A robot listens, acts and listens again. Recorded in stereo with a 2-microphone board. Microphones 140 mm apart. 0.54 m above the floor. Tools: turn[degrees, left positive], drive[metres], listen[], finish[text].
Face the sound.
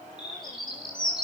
Thought: The bird: about 30° left or 150° left.
Action: turn[30]
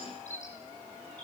Thought: So it is at 120° left.
Action: turn[120]
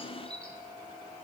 Action: finish[Found it: a bird, straight ahead.]